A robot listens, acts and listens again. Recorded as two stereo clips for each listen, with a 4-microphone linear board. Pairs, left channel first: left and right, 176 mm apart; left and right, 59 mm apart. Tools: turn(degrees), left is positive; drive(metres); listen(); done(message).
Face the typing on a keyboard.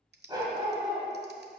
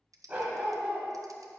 turn(degrees=-75)
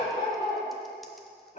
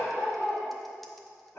listen()
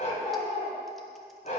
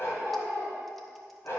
listen()
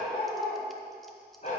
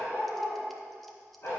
done("I heard typing on a keyboard, but can't make it out now. It was about straight ahead or 30° right.")